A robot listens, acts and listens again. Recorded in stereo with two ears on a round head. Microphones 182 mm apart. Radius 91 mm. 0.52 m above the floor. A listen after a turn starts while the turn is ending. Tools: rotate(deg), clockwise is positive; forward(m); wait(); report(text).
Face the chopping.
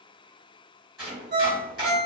rotate(-30)
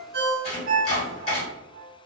rotate(-145)
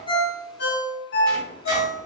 wait()
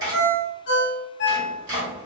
rotate(20)
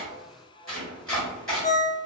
report("Facing the chopping, 1 to 2 m away.")